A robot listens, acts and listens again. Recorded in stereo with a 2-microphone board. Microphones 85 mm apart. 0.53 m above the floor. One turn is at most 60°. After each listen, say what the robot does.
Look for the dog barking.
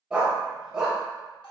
Turn 30° right.
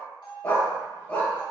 Turn 20° left.
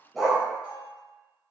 Found it: a dog barking, straight ahead, under 1 m away.